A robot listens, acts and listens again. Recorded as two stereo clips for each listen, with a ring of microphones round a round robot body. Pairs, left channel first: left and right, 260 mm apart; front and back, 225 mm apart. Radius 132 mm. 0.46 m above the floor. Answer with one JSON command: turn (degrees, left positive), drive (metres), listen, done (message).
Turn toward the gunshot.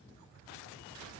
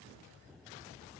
{"listen": true}
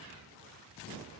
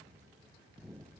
{"listen": true}
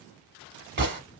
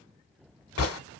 {"turn": -40}
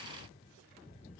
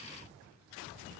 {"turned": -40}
{"done": "I heard a gunshot from this way, but can't make it out now."}